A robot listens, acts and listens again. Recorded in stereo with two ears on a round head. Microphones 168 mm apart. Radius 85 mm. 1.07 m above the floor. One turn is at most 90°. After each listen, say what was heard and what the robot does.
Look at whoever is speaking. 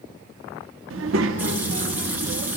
Turn 90° right.
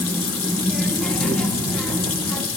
Facing the child speaking.